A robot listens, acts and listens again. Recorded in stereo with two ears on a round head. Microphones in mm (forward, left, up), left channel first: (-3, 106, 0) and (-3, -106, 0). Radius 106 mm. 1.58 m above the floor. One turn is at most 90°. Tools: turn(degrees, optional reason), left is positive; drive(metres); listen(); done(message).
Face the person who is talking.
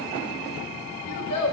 turn(degrees=90)
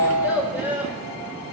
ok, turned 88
turn(degrees=-10, reason="So it is at 10° right.")
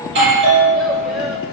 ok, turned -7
listen()
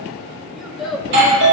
done("Found it: a child speaking, straight ahead.")